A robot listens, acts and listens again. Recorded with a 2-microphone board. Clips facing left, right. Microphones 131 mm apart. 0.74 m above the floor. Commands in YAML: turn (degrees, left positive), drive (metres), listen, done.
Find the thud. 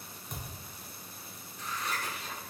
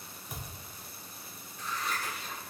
turn: -30
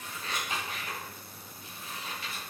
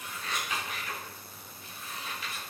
listen: true
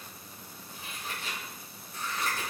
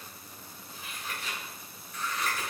done: "I heard a thud, but can't make it out now. It was about 25° left or 145° right."